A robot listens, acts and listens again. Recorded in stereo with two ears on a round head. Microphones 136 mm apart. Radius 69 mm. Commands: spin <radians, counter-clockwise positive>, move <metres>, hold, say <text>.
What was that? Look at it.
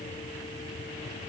hold
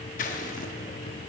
spin 0.96
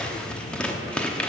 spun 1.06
say Found it: scissors, straight ahead.